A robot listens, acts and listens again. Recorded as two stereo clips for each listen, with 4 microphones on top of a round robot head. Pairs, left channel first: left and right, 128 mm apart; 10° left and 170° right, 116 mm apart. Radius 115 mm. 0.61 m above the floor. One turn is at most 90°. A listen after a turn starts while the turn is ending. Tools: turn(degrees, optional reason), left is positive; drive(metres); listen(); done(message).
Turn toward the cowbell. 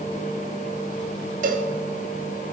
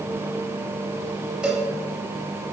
turn(degrees=-85, reason="The cowbell: 85° right.")
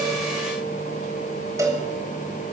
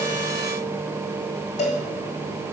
turn(degrees=-25, reason="The cowbell is now 25° right.")
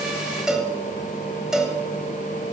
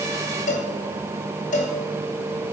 done("Facing the cowbell.")